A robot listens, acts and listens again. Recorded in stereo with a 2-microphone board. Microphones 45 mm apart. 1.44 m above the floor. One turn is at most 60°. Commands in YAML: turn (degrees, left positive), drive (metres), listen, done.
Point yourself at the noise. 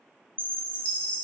turn: 30
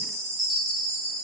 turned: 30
done: "Found it: a chime, straight ahead, 2 to 4 m away."